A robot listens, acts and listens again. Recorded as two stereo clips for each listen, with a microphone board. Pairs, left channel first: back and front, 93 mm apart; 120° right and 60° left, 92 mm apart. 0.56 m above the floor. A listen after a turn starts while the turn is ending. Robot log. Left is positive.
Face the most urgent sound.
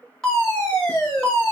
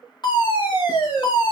note: The fire alarm: 100° right.
cmd yaw -100
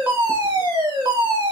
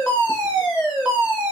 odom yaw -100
note: The fire alarm is now 25° right.
cmd yaw -25
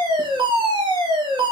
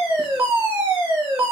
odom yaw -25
end: Facing the fire alarm.